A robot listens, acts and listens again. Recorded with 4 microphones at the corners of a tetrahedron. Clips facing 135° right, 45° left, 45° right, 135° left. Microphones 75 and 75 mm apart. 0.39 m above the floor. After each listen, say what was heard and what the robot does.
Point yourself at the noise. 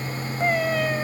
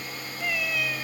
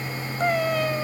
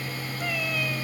The cat meowing: 90° right. Turn 90° right.
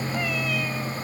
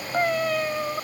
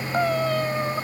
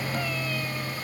Facing the cat meowing.